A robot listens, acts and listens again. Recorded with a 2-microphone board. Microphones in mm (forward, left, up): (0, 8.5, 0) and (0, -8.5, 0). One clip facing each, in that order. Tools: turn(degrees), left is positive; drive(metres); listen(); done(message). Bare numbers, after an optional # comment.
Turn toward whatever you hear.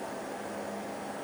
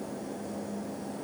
listen()
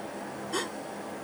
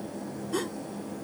# The gasp: about 20° left or 160° left.
turn(20)
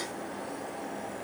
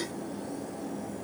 listen()
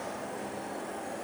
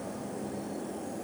done("I heard a gasp, but can't make it out now. It was about straight ahead or 140° left.")